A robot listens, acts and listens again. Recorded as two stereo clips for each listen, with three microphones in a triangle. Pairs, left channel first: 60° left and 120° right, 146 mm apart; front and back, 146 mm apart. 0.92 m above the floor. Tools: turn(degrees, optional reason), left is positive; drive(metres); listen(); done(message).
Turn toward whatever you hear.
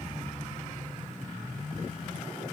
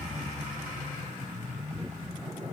listen()
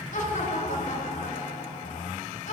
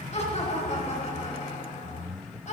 turn(degrees=30, reason="The laughter: 30° left.")
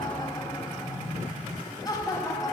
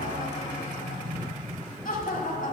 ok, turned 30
done("Facing the laughter.")